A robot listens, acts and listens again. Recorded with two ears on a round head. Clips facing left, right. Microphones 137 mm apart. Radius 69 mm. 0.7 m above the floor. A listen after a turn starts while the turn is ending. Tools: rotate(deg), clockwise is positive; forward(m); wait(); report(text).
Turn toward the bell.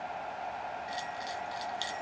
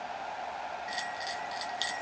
rotate(20)
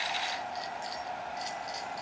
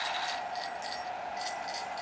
report("Facing the bell.")